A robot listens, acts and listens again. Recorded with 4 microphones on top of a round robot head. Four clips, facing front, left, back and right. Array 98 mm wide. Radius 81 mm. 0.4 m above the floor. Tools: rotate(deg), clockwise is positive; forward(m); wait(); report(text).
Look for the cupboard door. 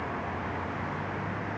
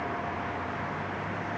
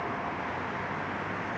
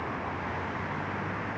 wait()
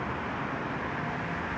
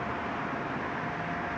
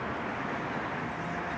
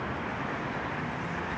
wait()
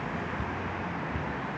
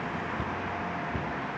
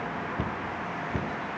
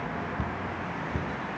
rotate(175)
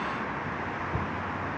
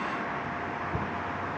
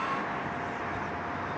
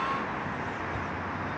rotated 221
rotate(-45)
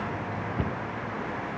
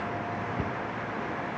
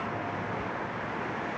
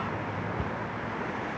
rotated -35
rotate(-10)
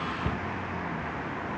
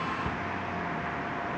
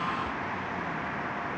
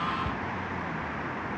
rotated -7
report("Found it: a cupboard door, straight ahead.")